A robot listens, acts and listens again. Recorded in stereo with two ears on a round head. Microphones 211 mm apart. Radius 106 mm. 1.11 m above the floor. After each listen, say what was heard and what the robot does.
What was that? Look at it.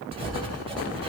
The writing: about 25° right or 155° right. Turn 25° right.
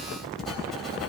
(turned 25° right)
Facing the writing.